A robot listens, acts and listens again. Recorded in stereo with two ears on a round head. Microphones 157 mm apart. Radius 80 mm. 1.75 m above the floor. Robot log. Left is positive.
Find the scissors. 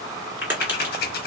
note: The scissors: about 60° left or 120° left.
cmd yaw +60
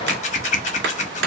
note: So it is at 45° left.
cmd yaw +45
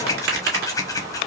note: The scissors is now 20° left.
cmd yaw +20
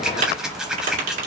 end: Found it: scissors, straight ahead.